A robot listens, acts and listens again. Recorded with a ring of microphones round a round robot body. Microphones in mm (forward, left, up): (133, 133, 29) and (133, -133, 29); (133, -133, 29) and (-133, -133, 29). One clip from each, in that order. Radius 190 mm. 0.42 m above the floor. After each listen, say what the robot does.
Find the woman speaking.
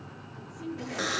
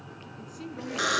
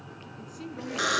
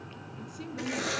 Turn 110° right.
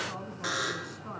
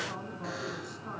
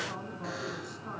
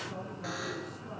Turn 15° left.
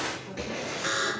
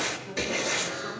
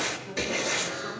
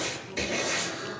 Keep listening.
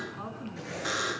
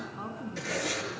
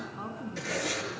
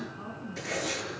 Facing the woman speaking, over 4 m away.